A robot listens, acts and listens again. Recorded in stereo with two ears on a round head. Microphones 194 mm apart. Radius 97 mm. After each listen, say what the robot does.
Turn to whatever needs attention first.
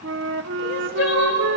Turn 60° left.
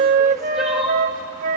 Facing the crying.